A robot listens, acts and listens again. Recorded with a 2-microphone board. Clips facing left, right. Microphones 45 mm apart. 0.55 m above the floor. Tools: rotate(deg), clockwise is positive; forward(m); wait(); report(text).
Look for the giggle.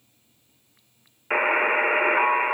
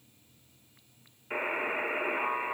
wait()
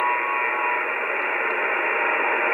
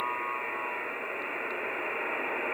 wait()
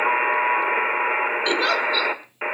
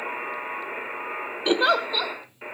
rotate(20)
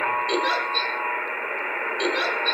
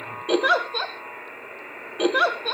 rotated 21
rotate(140)
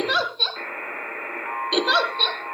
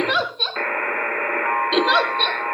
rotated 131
report("Facing the giggle.")